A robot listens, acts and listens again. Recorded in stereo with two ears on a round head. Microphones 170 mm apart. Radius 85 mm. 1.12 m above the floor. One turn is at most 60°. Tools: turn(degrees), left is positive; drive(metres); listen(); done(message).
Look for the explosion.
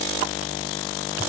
listen()
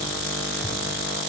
listen()
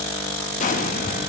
turn(degrees=40)
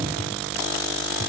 listen()
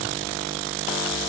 done("I heard an explosion, but can't make it out now. It was about straight ahead or 100° left.")